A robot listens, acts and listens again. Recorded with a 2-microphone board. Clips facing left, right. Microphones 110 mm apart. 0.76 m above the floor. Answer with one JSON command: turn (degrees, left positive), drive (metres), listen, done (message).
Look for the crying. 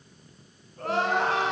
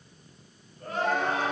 {"turn": 90}
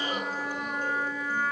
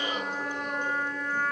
{"listen": true}
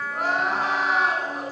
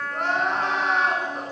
{"done": "Found it: crying, straight ahead, over 4 m away."}